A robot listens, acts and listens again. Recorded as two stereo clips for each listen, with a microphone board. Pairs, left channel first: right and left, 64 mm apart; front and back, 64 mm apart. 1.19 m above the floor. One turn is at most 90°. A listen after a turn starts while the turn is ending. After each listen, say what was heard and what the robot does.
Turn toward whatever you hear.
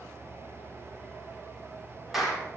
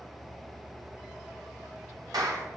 The clap: 175° left. Turn 90° left.
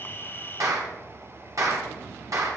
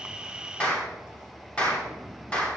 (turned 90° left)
The clap is now 70° left. Turn 70° left.
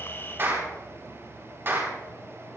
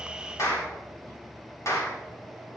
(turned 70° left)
The clap is now 40° left. Turn 40° left.
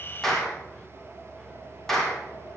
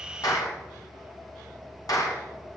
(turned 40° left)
Found it: a clap, straight ahead, 2 to 4 m away.